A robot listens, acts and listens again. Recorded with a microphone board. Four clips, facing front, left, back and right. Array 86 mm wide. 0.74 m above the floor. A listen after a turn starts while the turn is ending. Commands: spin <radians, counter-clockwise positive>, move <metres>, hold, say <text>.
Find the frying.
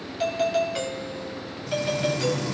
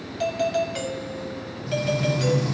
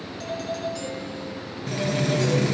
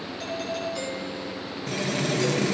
spin -2.36
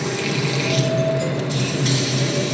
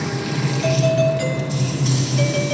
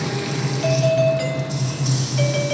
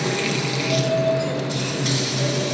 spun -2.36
spin -0.52
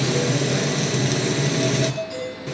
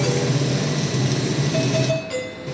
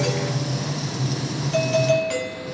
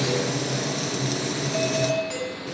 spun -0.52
say Found it: frying, straight ahead, over 4 m away.